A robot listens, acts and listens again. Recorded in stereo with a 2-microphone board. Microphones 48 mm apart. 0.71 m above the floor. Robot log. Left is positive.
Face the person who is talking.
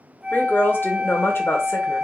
note: The woman speaking: about 60° left or 120° left.
cmd yaw +60
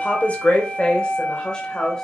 note: So it is at 15° left.
cmd yaw +15
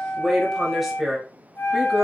note: The woman speaking is now 10° right.
cmd yaw -10
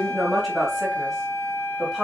end: Facing the woman speaking.